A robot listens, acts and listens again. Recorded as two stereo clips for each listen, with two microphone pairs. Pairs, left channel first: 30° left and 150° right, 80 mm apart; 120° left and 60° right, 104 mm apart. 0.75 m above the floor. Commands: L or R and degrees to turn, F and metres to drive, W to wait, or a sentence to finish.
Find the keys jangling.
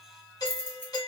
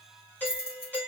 L90
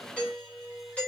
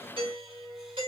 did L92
W
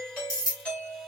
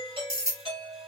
Facing the keys jangling, 1 to 2 m away.